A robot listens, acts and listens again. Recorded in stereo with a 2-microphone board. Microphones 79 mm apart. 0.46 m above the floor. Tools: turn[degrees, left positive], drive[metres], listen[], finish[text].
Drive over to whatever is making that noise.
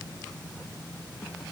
Action: listen[]
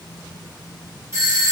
Thought: The doorbell: about 40° right or 140° right.
Action: turn[-40]
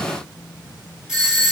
Thought: So it is at 10° right.
Action: turn[-10]
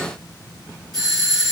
Action: drive[1.0]
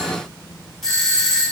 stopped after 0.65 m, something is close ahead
Action: finish[Arrived at the doorbell, straight ahead.]